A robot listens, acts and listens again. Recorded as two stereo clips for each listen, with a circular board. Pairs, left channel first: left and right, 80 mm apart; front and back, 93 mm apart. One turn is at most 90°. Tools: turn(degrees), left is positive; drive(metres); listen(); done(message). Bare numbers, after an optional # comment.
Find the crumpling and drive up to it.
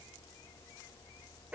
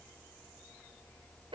listen()
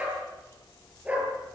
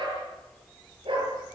listen()
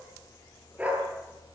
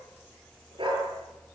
done("I can't make out crumpling, only a dog barking.")